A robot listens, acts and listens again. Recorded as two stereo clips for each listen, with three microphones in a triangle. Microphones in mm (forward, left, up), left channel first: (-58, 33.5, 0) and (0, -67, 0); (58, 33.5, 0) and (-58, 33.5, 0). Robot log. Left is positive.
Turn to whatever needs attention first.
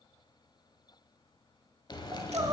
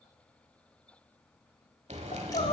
end: Found it: crying, straight ahead.